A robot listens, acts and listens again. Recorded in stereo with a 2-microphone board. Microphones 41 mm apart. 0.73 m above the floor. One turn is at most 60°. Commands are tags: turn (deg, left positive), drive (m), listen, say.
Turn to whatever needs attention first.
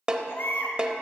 <turn deg="60"/>
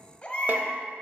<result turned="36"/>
<turn deg="30"/>
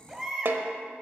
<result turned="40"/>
<turn deg="-10"/>
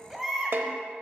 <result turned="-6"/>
<say>Found it: a baby crying, straight ahead, 1 to 2 m away.</say>